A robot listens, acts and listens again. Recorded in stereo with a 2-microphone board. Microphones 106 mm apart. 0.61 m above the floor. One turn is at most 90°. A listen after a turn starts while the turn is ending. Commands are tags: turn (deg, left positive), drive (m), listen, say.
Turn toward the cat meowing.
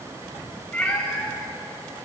<turn deg="30"/>
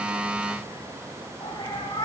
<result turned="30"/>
<turn deg="90"/>
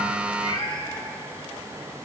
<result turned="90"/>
<turn deg="45"/>
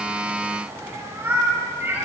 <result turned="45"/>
<turn deg="-20"/>
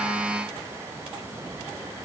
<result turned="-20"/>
<listen/>
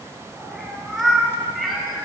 <say>Facing the cat meowing, over 4 m away.</say>